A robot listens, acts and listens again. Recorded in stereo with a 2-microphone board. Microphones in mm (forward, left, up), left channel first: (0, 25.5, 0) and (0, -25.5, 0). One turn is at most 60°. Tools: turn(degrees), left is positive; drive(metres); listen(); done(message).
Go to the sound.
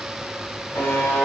turn(degrees=60)
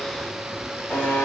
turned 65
turn(degrees=40)
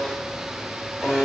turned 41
drive(metres=1.0)
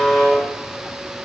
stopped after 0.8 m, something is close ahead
done("I am next to the buzzer.")